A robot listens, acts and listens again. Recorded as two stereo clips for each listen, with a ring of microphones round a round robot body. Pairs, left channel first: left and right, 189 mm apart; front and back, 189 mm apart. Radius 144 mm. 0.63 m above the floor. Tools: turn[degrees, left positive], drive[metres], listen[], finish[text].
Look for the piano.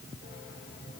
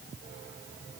Action: listen[]
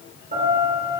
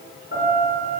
Thought: The piano: 35° right.
Action: turn[-35]
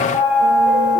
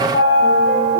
Action: finish[Facing the piano.]